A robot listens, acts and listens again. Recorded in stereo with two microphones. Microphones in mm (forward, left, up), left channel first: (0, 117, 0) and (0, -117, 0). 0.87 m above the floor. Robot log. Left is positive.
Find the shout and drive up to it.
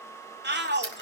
note: The shout: about 45° right or 135° right.
cmd yaw -45
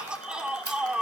cmd fwd 1.0
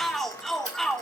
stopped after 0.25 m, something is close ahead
end: Something is in my way. I am facing the shout but have not reached it.